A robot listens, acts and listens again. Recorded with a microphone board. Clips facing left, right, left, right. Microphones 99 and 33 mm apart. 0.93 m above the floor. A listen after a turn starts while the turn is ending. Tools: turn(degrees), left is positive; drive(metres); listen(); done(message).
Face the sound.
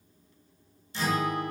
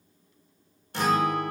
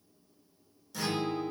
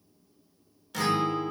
turn(degrees=-60)
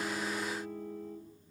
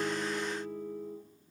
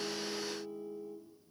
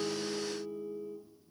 done("Facing the guitar, under 1 m away.")